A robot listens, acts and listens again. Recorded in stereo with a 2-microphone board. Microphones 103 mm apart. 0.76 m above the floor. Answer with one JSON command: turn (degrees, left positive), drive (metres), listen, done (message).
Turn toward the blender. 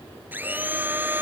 {"turn": -20}
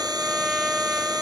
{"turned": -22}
{"listen": true}
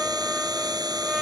{"turn": -140}
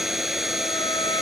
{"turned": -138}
{"done": "Found it: a blender, straight ahead."}